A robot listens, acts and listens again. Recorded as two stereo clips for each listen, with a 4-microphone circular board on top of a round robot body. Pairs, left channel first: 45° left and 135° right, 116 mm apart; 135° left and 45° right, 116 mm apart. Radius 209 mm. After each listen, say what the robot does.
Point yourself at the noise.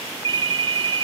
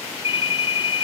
Turn 175° left.
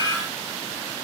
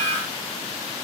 Keep listening.
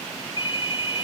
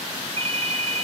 Facing the ringtone, 2 to 4 m away.